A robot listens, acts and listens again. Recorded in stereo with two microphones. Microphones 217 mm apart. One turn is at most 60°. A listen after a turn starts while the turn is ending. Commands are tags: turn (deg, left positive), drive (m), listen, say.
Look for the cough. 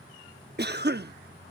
<turn deg="-50"/>
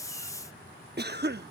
<turn deg="-60"/>
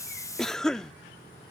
<say>Found it: a cough, straight ahead.</say>